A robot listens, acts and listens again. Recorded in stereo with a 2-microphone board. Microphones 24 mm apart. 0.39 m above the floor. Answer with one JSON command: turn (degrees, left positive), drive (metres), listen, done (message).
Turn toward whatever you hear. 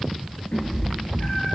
{"turn": 90}
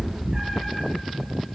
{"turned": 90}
{"turn": -20}
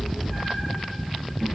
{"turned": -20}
{"turn": -10}
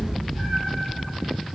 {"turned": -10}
{"turn": -10}
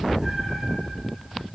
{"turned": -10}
{"done": "Facing the cat meowing, over 4 m away."}